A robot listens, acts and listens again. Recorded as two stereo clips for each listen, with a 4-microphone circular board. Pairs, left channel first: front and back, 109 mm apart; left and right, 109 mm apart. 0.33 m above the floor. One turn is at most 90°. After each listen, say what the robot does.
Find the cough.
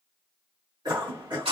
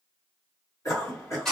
Turn 90° left.
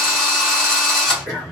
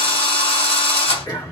Turn 50° left.
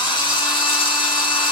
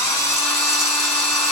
Keep listening.
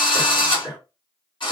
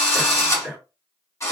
Facing the cough.